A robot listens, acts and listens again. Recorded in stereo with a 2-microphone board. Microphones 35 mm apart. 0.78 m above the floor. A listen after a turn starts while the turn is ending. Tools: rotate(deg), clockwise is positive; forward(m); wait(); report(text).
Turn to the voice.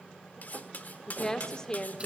rotate(-20)
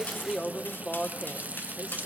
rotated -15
rotate(-25)
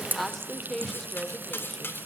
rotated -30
rotate(-10)
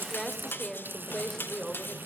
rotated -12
rotate(-10)
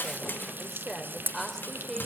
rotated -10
report("Found it: a woman speaking, straight ahead.")